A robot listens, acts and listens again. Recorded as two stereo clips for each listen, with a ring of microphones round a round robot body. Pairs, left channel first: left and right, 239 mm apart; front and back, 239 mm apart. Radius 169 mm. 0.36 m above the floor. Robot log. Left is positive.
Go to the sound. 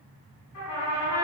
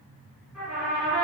note: The trumpet: 90° left.
cmd yaw +90
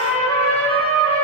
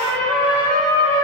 note: The trumpet is now 25° left.
cmd yaw +25
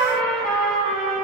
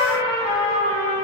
cmd fwd 1.0
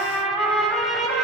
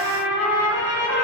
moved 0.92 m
cmd fwd 1.0
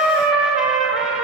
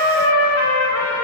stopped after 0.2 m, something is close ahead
end: Arrived at the trumpet, straight ahead.